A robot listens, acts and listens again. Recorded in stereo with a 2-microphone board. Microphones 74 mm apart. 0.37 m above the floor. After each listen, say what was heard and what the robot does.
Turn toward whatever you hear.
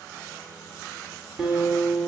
Turn 30° right.
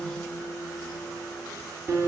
So it is at 140° right. Turn 140° right.
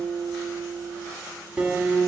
The guitar is now 20° right. Turn 20° right.
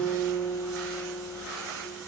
Found it: a guitar, straight ahead.